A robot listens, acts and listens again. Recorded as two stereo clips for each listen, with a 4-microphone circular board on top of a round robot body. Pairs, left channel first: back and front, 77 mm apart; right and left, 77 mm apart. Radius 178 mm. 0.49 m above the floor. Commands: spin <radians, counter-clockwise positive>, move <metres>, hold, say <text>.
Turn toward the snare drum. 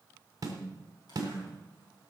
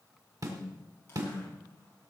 spin 0.79
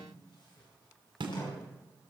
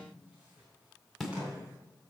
say Facing the snare drum, 1 to 2 m away.